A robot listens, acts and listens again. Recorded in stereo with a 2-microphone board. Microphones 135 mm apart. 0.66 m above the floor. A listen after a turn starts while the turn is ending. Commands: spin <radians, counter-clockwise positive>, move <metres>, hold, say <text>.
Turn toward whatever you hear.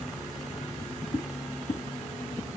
spin 0.61
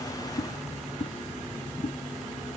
spin 1.92
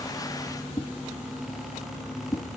spin 0.52
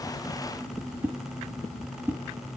spin -0.26
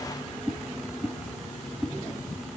say Found it: a whoosh, straight ahead, 2 to 4 m away.